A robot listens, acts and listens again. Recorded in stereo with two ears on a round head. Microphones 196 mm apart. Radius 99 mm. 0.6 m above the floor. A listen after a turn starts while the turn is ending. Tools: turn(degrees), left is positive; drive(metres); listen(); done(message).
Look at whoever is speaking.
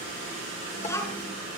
turn(degrees=30)
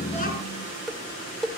listen()
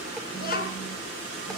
turn(degrees=135)
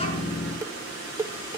listen()
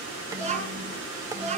turn(degrees=-30)
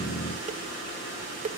listen()
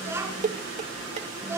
turn(degrees=-10)
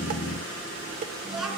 done("Facing the child speaking, over 4 m away.")